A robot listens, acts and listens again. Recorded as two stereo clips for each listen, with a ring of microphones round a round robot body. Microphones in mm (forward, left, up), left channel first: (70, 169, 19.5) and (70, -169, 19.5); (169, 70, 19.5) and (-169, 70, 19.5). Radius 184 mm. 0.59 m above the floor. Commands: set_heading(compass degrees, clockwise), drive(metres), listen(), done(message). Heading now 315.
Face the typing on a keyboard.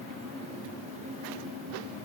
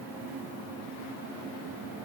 listen()
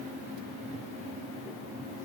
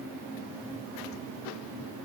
listen()
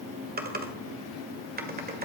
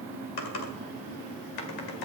set_heading(340)
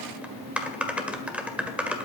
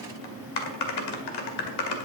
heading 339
done("Facing the typing on a keyboard.")